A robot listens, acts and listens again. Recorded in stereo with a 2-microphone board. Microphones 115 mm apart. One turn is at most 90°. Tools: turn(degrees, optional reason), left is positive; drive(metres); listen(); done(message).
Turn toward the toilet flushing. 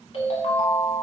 listen()
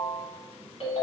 listen()
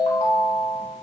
done("I can't make out a toilet flushing, only a ringtone.")